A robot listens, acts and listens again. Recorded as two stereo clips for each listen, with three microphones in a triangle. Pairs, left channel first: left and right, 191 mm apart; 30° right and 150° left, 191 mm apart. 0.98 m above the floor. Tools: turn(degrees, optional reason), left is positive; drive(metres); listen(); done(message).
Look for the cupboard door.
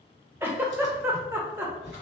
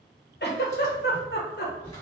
turn(degrees=50, reason="The cupboard door: 50° left.")
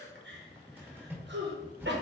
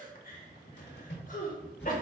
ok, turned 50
turn(degrees=-10, reason="The cupboard door is now 10° right.")
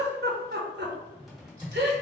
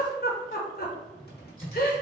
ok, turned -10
done("Facing the cupboard door.")